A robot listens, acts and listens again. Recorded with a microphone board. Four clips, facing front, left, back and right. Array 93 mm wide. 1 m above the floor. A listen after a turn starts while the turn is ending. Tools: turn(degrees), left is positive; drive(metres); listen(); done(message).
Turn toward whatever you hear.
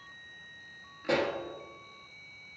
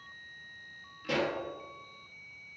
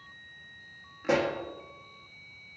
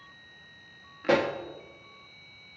turn(degrees=-105)
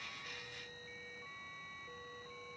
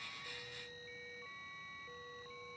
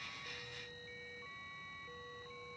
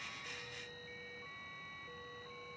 done("I heard a pop from this way, but can't make it out now.")